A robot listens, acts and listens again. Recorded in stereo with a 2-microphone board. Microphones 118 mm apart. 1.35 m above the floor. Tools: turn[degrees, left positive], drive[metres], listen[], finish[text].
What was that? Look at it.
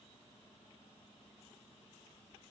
Action: listen[]
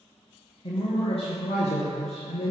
Thought: The man speaking: about 70° left or 110° left.
Action: turn[70]
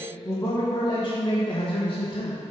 Thought: So it is at 40° left.
Action: turn[40]
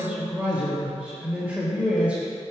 Thought: The man speaking is now 20° right.
Action: turn[-20]
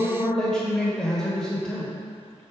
Action: finish[Found it: a man speaking, straight ahead.]